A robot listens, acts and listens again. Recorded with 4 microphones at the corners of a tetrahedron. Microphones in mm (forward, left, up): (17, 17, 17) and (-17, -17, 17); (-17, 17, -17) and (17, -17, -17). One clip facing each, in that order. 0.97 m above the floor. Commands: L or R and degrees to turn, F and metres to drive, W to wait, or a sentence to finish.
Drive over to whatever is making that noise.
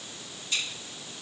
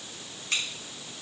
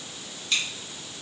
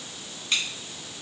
R115
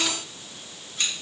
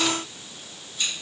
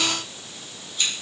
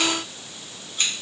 F1.0
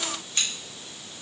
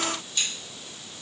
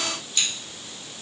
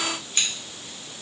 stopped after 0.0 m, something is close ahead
Something is in my way. I am facing the scissors but have not reached it.